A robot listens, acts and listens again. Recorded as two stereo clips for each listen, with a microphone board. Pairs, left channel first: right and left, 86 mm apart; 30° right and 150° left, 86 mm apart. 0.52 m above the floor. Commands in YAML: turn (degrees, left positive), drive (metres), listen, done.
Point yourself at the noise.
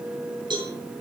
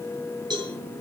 turn: 115
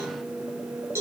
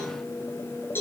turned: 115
turn: 35
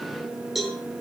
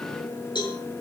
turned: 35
done: "Facing the cowbell, over 4 m away."